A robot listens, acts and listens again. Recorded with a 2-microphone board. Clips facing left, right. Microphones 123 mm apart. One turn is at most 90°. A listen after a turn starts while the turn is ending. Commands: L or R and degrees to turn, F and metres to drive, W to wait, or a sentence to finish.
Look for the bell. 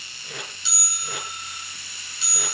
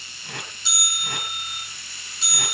R45
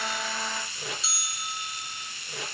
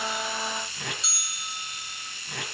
Facing the bell.